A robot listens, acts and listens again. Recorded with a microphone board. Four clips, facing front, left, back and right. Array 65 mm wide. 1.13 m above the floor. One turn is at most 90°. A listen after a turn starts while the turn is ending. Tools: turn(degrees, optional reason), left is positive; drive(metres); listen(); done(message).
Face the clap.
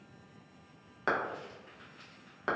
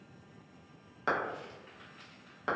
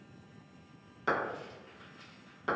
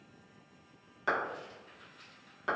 turn(degrees=25, reason="The clap: 25° left.")
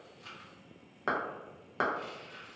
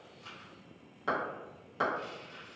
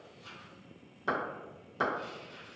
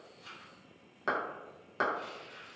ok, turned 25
turn(degrees=-15, reason="The clap is now 15° right.")
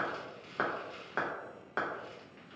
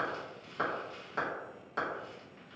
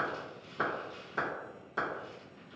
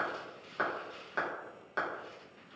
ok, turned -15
done("Facing the clap.")